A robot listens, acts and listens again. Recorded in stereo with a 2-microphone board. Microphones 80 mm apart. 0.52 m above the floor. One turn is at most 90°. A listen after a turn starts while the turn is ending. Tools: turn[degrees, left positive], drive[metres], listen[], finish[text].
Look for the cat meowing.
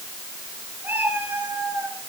Thought: The cat meowing: about 25° right or 155° right.
Action: turn[-25]
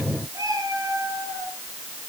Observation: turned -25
Thought: So it is at 130° right.
Action: turn[-90]
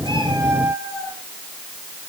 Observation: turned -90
Thought: The cat meowing is now 30° right.
Action: turn[-30]
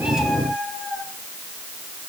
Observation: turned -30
Action: finish[Facing the cat meowing.]